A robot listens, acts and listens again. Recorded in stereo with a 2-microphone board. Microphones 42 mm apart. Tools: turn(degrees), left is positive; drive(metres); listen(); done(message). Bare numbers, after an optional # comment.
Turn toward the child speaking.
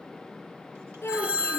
turn(90)
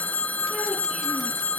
listen()
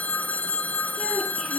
listen()
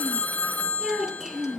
# The child speaking is now 10° right.
turn(-10)
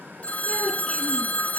listen()
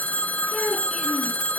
done("Found it: a child speaking, straight ahead, over 4 m away.")